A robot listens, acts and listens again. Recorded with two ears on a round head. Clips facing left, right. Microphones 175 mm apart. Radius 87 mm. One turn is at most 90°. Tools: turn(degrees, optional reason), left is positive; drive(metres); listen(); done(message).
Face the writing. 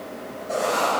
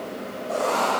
turn(degrees=15, reason="The writing: about 15° left or 165° left.")
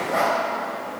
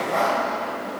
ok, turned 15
done("Found it: writing, straight ahead, 2 to 4 m away.")